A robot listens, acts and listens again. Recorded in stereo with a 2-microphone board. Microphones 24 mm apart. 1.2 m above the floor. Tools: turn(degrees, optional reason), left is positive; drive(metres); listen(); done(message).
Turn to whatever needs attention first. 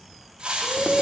turn(degrees=-90)
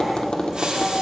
listen()
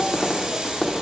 listen()
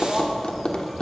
done("Facing where the shout came from. I can't hear it now.")